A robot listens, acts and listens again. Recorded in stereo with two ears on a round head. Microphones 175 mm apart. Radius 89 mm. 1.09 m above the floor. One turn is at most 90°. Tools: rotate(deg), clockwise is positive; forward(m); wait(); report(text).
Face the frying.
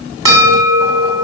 wait()
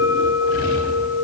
wait()
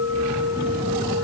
report("I can't make out frying, only a bell.")